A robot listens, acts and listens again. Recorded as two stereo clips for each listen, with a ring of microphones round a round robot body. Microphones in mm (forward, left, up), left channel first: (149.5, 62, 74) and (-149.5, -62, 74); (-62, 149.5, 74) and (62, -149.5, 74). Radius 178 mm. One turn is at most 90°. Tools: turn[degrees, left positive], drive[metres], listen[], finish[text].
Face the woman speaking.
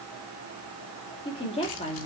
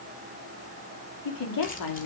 Thought: The woman speaking: 90° left.
Action: turn[90]
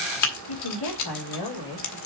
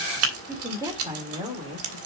Thought: The woman speaking is now 10° left.
Action: turn[10]
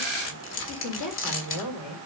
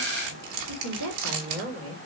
Thought: The woman speaking is now 15° right.
Action: turn[-15]
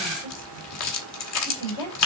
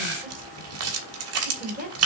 Action: finish[Facing the woman speaking, over 4 m away.]